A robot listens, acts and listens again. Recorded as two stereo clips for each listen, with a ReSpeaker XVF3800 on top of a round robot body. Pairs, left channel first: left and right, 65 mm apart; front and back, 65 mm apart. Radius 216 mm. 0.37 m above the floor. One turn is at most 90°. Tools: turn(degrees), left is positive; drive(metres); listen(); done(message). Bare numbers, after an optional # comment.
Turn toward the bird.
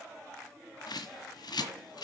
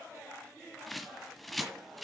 # The bird: 90° left.
turn(90)
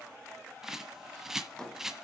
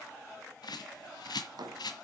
done("Facing the bird, 1 to 2 m away.")